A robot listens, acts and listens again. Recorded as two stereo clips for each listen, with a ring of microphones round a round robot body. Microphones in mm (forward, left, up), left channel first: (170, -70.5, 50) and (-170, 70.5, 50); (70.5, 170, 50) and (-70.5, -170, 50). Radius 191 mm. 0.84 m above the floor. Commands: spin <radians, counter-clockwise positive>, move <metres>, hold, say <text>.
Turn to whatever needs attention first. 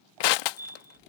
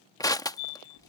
spin 1.31
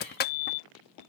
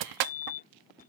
say Found it: a fire alarm, straight ahead.